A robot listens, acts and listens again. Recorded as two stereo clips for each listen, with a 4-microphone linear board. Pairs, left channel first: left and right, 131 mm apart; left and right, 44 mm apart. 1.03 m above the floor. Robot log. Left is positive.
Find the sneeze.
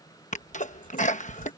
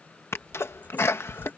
note: The sneeze: about 70° left or 110° left.
cmd yaw +70
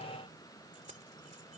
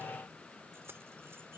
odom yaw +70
cmd idle
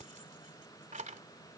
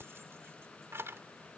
end: I heard a sneeze, but can't make it out now. It was about straight ahead or 40° left.